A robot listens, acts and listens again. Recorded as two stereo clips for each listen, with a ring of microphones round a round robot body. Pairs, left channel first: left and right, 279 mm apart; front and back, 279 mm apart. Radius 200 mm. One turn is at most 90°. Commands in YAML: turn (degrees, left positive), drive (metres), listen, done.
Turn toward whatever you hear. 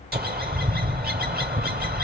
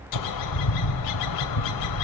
turn: -35
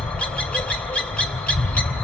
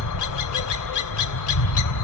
done: "Facing the bird."